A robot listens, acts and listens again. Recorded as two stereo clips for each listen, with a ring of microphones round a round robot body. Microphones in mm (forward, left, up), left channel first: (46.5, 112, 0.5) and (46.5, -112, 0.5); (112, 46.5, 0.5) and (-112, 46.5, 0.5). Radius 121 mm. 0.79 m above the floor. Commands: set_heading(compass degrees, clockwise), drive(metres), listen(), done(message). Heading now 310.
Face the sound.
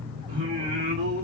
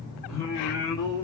set_heading(40)
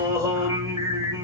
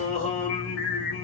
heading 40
set_heading(55)
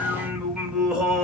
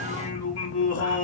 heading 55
done("Found it: singing, straight ahead, 1 to 2 m away.")